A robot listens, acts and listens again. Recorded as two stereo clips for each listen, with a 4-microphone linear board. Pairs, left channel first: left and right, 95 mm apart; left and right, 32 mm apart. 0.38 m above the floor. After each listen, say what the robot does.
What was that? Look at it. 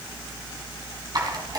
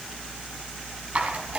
Turn 45° right.
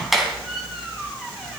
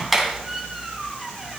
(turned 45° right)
Found it: a squeak, straight ahead.